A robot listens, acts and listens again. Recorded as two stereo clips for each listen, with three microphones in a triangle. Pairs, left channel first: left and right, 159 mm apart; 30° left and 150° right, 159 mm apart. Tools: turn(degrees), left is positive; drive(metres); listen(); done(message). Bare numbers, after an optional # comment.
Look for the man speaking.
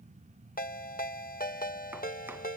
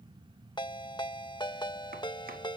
listen()
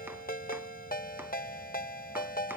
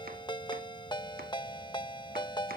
listen()
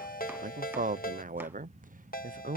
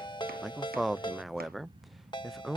# The man speaking: 60° right.
turn(-60)
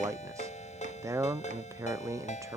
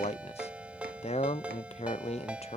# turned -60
# The man speaking is now 20° right.
turn(-20)
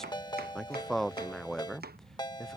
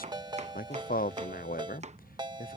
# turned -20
done("Found it: a man speaking, straight ahead.")